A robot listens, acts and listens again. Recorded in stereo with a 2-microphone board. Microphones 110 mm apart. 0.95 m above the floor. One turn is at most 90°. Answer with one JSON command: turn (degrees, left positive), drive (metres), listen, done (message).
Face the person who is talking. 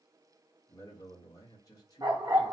{"turn": 35}
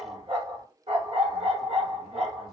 {"listen": true}
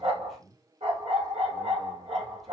{"done": "Facing the man speaking."}